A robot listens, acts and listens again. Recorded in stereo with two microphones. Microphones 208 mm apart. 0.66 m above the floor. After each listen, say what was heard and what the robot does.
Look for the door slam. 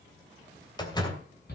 The door slam: about 20° left or 160° left. Turn 20° left.
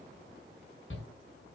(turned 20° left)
Keep listening.
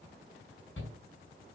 I heard a door slam, but can't make it out now. It was about straight ahead or 140° left.